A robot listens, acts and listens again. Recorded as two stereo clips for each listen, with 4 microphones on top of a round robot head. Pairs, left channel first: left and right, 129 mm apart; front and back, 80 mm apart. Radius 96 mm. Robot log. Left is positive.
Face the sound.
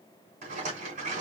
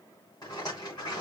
note: The rattle: 65° right.
cmd yaw -65
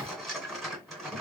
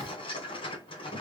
end: Found it: a rattle, straight ahead, 1 to 2 m away.